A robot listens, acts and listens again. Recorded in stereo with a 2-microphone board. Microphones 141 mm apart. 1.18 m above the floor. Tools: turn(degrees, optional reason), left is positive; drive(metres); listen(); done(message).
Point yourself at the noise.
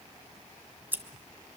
turn(degrees=-30)
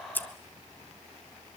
turn(degrees=15, reason="So it is at 15° left.")
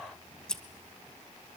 done("Facing the scissors, 1 to 2 m away.")